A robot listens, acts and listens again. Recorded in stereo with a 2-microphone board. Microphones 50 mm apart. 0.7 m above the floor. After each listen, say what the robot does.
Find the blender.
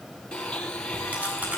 Turn 20° left.
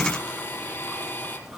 Turn 145° left.
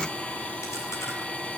Turn 20° left.
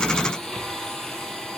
Turn 10° left.
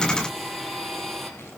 Found it: a blender, straight ahead, 2 to 4 m away.